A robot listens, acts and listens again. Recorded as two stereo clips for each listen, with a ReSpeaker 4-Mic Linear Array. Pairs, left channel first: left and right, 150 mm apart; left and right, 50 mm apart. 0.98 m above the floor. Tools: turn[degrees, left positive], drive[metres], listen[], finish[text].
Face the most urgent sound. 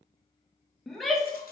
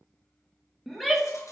Action: turn[30]
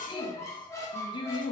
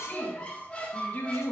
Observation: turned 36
Thought: So it is at 145° left.
Action: turn[145]
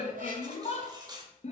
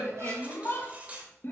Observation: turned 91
Thought: The shout is now 55° left.
Action: turn[55]
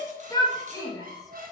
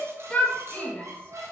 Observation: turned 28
Thought: The shout is now 25° left.
Action: turn[25]
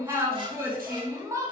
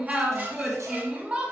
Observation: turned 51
Thought: The shout is now 20° right.
Action: turn[-20]
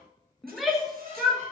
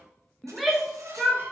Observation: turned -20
Action: finish[Found it: a shout, straight ahead.]